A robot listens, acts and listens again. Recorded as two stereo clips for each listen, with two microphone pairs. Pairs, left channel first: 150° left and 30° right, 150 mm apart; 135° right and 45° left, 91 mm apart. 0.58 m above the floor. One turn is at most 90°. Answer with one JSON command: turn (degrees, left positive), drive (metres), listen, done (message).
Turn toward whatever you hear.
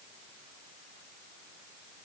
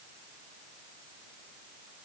{"listen": true}
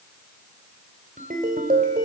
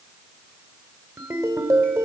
{"turn": -10}
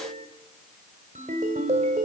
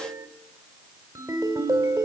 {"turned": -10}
{"done": "Found it: a ringtone, straight ahead."}